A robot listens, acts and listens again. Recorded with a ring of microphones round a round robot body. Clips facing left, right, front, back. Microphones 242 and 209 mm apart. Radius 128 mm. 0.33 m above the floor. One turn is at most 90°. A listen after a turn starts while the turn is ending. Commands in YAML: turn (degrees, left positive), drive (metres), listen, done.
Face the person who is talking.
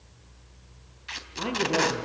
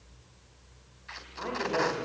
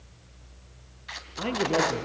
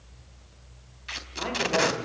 turn: 45
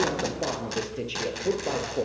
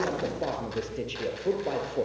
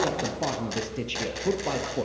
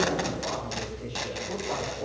done: "Found it: a man speaking, straight ahead."